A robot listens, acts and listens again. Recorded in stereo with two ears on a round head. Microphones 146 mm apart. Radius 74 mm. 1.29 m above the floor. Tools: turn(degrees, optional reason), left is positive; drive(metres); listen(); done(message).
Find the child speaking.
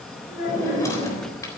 turn(degrees=55, reason="The child speaking: about 55° left or 125° left.")
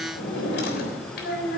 turn(degrees=70, reason="So it is at 70° left.")
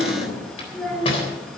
done("Found it: a child speaking, straight ahead.")